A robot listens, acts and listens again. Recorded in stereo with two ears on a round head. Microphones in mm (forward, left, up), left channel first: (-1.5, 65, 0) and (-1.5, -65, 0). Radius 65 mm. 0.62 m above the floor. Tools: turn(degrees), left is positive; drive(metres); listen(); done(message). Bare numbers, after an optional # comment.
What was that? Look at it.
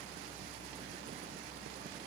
listen()
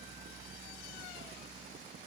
listen()
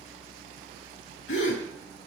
turn(90)
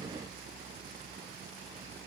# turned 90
done("I heard a gasp from this way, but can't make it out now.")